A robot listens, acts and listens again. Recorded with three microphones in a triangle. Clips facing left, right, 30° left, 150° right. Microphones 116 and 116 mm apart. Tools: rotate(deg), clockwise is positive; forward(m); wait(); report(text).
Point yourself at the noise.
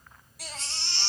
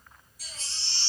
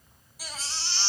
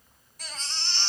rotate(-110)
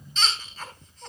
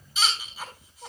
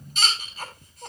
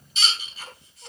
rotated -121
rotate(10)
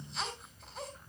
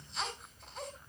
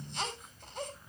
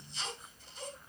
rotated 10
report("Found it: a baby crying, straight ahead, 2 to 4 m away.")